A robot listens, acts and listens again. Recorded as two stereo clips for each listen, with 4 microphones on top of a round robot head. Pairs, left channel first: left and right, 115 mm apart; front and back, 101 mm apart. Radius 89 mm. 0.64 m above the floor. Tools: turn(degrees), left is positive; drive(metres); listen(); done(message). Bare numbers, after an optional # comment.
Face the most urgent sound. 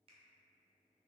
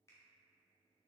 listen()
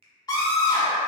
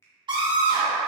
# The scream: 145° left.
turn(145)
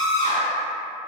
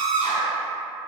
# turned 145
# The scream is now 30° left.
turn(30)
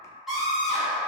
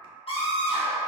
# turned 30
done("Found it: a scream, straight ahead, 1 to 2 m away.")